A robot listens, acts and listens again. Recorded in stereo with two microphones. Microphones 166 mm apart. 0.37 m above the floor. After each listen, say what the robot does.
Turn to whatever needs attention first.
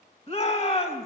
Turn 40° left.
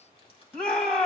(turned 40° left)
Facing the shout, 2 to 4 m away.